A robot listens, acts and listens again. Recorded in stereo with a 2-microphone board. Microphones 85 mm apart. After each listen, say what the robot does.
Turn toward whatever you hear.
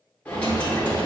Turn 20° left.
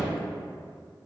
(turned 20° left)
Keep listening.
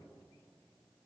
I heard a dropped coin, but can't make it out now. It was about straight ahead or 140° left.